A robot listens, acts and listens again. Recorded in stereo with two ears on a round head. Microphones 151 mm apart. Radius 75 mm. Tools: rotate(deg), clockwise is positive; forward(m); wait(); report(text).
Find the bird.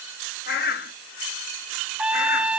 rotate(-60)
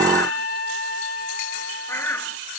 rotate(-15)
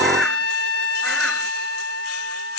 wait()
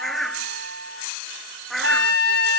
report("Facing the bird.")